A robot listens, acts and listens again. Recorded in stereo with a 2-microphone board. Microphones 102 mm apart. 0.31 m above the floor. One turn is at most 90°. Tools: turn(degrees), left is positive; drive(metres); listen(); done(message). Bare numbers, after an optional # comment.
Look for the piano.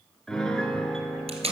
turn(30)
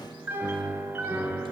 # So it is at 20° right.
turn(-20)
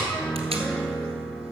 done("Found it: a piano, straight ahead.")